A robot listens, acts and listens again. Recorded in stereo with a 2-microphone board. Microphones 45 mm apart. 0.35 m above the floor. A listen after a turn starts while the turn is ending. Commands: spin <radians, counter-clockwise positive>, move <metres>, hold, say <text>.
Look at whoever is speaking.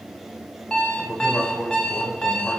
spin 0.52
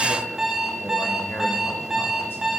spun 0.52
hold
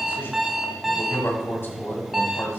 spin 2.01
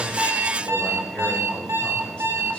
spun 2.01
hold
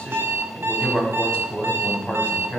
spin 0.44
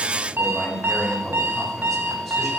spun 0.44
say Facing the man speaking, 2 to 4 m away.